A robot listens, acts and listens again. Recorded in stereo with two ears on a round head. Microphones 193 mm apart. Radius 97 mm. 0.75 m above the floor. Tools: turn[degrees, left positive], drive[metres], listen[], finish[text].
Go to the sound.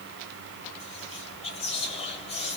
Thought: The whispering: about 30° left or 150° left.
Action: turn[30]
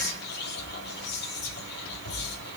Thought: So it is at 125° left.
Action: turn[125]
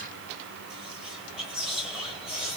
Action: drive[1.0]
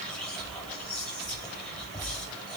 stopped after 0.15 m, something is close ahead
Action: finish[Something is in my way. I am facing the whispering but have not reached it.]